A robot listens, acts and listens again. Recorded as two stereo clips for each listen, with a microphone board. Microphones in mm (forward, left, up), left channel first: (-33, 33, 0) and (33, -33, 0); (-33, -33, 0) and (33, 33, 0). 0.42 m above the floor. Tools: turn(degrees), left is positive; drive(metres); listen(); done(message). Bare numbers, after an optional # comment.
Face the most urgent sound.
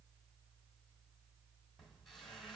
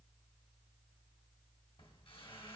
listen()
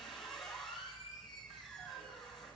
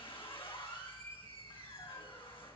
listen()
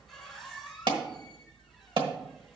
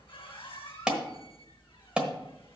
# The alarm: 35° right.
turn(-35)
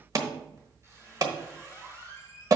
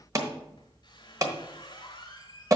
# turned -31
done("Found it: an alarm, straight ahead.")